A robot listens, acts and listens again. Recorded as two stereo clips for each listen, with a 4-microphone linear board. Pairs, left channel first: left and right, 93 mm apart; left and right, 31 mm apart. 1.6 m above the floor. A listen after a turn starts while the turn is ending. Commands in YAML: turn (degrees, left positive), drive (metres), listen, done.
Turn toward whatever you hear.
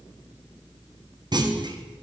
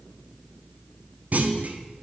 turn: -50
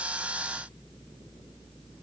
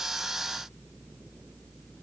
listen: true
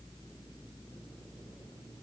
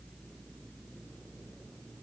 done: "I heard a clunk, but can't make it out now. It was about straight ahead or 80° right."